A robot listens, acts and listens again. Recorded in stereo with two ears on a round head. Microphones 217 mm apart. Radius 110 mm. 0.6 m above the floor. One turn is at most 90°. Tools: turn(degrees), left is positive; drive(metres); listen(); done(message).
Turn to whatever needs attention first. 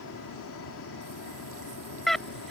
turn(degrees=30)
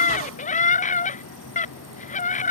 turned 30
turn(degrees=90)
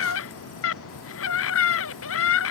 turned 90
turn(degrees=55)
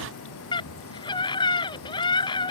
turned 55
turn(degrees=20)
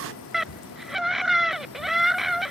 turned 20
done("Found it: a scream, straight ahead.")